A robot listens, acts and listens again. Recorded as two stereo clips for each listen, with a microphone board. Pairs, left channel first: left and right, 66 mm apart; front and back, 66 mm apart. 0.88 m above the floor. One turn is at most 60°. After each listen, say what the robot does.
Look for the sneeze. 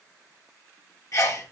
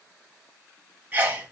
Turn 60° left.
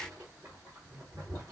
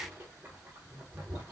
Turn 60° left.
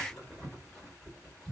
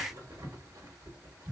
Facing where the sneeze came from. I can't hear it now.